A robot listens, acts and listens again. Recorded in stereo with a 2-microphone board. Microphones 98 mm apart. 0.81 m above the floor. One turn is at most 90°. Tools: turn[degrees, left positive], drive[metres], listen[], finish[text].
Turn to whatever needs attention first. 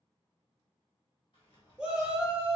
Action: turn[-30]
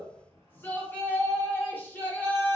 Thought: So it is at 20° left.
Action: turn[20]
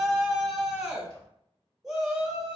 Action: finish[Facing the shout, under 1 m away.]